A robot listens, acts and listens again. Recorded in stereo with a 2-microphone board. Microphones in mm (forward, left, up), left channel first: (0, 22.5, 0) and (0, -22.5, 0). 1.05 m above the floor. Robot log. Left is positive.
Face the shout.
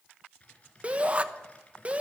note: The shout: about 30° right or 150° right.
cmd yaw -30
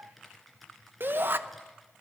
note: So it is at 115° right.
cmd yaw -115
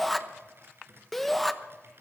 end: Facing the shout.